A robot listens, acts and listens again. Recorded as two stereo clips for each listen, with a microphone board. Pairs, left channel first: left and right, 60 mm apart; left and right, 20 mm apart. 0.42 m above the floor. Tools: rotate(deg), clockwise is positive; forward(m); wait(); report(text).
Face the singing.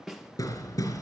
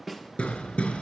wait()
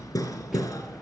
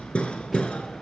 wait()
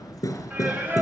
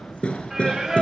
rotate(30)
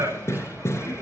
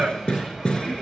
rotate(130)
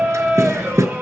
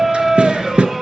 rotate(35)
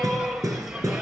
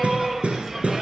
report("Facing the singing, 2 to 4 m away.")